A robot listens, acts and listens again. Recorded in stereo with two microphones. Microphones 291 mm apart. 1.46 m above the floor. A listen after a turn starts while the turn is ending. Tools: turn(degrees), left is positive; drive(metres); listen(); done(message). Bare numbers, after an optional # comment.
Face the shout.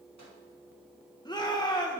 turn(30)
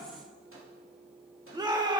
# So it is at 15° right.
turn(-15)
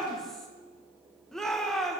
done("Found it: a shout, straight ahead, 1 to 2 m away.")